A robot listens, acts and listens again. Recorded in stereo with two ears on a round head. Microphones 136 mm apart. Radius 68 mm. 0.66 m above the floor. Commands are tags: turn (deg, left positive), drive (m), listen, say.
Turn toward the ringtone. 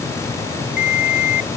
<turn deg="60"/>
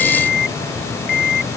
<turn deg="65"/>
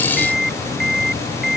<say>Found it: a ringtone, straight ahead.</say>